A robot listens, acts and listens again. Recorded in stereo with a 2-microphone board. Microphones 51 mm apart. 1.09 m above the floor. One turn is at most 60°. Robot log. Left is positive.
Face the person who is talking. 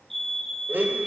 cmd idle
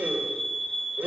cmd idle
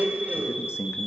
note: The man speaking: about 50° left or 130° left.
cmd yaw +50
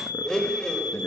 cmd idle
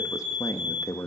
note: So it is at 80° left.
cmd yaw +60
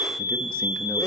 note: Nothing new. It was at 20° left.
cmd yaw +20
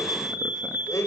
cmd idle
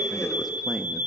end: Facing the man speaking.